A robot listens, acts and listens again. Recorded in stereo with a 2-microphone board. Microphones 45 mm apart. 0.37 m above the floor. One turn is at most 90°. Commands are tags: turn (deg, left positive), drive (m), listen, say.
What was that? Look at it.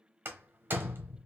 <turn deg="-55"/>
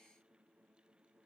<listen/>
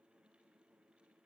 <say>I heard a door slam, but can't make it out now. It was about straight ahead or 70° right.</say>